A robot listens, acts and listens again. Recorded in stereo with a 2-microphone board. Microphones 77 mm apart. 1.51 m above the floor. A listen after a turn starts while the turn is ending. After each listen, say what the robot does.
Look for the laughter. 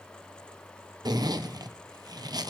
Keep listening.
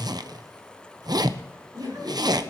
Turn 65° right.
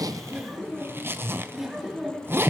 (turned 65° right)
Found it: laughter, straight ahead.